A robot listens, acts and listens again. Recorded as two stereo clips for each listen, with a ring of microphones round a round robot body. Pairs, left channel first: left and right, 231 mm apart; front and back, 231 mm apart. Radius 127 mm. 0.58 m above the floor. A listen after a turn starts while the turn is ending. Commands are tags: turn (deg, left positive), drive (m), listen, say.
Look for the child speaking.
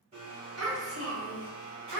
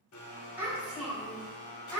<turn deg="-80"/>
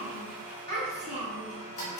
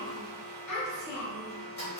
<turn deg="20"/>
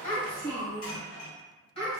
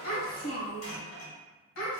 <turn deg="25"/>
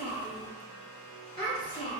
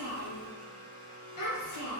<say>Facing the child speaking, 2 to 4 m away.</say>